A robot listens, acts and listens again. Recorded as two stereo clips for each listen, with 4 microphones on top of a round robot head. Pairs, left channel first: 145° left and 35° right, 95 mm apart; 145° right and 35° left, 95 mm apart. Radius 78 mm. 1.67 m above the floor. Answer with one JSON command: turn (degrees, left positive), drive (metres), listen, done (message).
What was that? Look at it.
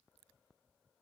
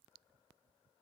{"listen": true}
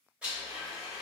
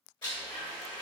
{"turn": -110}
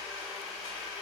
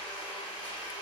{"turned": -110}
{"turn": -30}
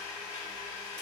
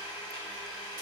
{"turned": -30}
{"turn": -15}
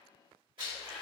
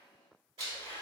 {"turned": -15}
{"done": "Facing the blender."}